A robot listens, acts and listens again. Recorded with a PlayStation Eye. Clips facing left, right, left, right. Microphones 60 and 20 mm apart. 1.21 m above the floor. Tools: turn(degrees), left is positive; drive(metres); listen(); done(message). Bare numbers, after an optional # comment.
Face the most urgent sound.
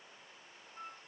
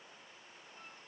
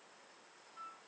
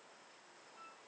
listen()
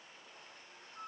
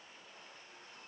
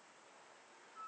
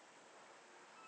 listen()
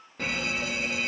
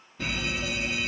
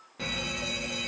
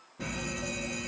# The fire alarm: about 60° left or 120° left.
turn(60)
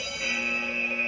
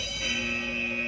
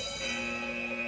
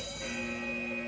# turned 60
# So it is at 45° left.
turn(45)
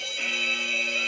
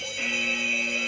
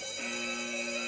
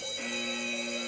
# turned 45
# The fire alarm is now 10° right.
turn(-10)
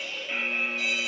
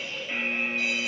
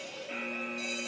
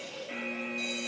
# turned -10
done("Found it: a fire alarm, straight ahead.")